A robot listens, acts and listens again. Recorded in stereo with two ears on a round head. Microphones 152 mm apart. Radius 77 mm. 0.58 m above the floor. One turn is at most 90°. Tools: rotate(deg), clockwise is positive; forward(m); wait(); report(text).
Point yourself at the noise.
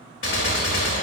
rotate(-90)
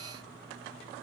report("Facing where the gunshot came from. I can't hear it now.")